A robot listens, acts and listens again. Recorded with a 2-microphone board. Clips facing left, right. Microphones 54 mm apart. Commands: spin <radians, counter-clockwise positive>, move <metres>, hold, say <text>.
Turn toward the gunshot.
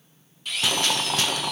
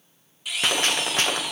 spin -0.70
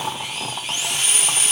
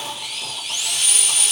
hold
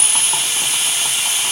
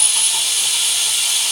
say I heard a gunshot, but can't make it out now. It was about straight ahead or 100° right.